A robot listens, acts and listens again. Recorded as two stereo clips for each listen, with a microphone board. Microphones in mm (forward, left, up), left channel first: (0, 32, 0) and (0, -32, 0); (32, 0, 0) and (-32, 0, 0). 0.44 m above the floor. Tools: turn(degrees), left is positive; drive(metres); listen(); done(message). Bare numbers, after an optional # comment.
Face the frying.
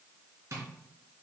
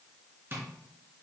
listen()
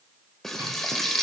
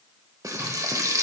# The frying: 175° left.
turn(175)
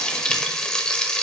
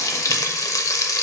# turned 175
# The frying is now 15° left.
turn(15)
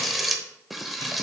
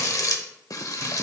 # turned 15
done("Facing the frying.")